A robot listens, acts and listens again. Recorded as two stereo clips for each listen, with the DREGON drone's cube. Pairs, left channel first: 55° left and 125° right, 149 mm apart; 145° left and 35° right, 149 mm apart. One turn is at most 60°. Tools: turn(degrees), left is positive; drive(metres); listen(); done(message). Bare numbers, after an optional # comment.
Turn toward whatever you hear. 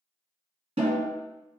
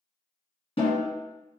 # The snare drum: 170° right.
turn(-60)
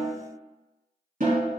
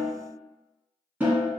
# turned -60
# The snare drum is now 115° right.
turn(-60)
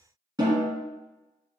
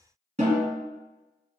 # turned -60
# The snare drum is now 65° right.
turn(-60)
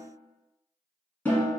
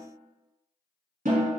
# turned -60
# The snare drum is now 20° right.
turn(-20)
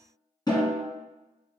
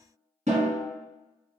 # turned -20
done("Facing the snare drum.")